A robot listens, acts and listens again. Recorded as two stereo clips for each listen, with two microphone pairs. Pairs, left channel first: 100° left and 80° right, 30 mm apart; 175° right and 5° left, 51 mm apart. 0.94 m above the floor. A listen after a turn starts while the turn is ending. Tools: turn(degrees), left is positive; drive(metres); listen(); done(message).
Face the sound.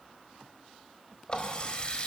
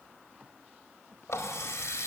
turn(degrees=160)
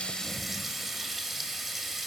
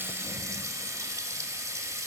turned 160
done("Found it: a running tap, straight ahead, 1 to 2 m away.")